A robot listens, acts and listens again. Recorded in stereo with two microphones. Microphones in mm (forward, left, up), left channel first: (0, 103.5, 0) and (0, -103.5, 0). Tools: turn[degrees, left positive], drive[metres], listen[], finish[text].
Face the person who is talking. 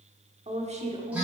Thought: The woman speaking: about 30° right or 150° right.
Action: turn[-30]
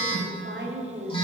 Thought: So it is at 115° right.
Action: turn[-115]
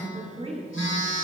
Thought: The woman speaking is now 30° right.
Action: turn[-30]
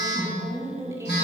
Thought: The woman speaking is now 15° right.
Action: turn[-15]
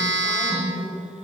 Action: finish[Facing the woman speaking, 1 to 2 m away.]